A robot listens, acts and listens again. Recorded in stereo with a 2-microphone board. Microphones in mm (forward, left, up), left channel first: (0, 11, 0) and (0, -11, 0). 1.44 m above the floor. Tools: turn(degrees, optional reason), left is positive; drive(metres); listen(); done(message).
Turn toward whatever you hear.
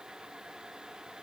listen()
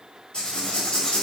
turn(degrees=55, reason="The writing: about 55° left or 125° left.")
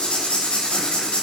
turn(degrees=70, reason="So it is at 70° left.")
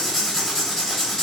done("Found it: writing, straight ahead, 2 to 4 m away.")